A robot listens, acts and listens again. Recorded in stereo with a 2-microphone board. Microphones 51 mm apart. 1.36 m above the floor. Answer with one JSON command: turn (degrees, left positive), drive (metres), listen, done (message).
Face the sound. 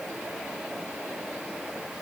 {"listen": true}
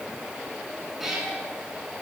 {"turn": -30}
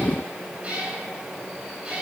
{"turn": -160}
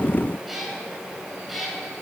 {"done": "Found it: a cat meowing, straight ahead."}